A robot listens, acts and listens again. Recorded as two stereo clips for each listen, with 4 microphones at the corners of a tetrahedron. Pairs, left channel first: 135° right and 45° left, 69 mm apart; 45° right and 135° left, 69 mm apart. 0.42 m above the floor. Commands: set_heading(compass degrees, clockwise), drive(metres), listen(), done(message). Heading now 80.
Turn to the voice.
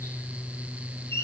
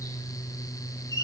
listen()
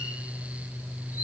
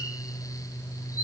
listen()
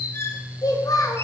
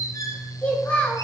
set_heading(195)
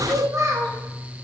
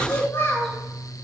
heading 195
set_heading(185)
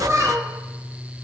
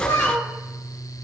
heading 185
done("Found it: a child speaking, straight ahead, 1 to 2 m away.")